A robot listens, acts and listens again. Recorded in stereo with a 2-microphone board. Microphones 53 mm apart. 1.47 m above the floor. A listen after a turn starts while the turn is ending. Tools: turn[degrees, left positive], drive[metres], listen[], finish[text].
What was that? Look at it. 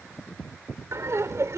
Thought: The laughter: about 65° right or 115° right.
Action: turn[-65]
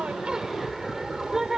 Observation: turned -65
Thought: So it is at 10° right.
Action: turn[-10]
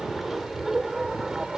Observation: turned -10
Thought: The laughter is now 10° right.
Action: turn[-10]
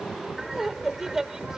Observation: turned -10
Thought: The laughter is now 10° right.
Action: turn[-10]
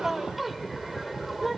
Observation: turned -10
Action: finish[Facing the laughter.]